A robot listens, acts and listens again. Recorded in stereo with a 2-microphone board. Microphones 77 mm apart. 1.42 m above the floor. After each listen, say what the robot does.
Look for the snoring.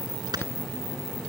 Turn 65° right.
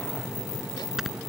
Keep listening.
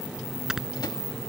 Facing the snoring.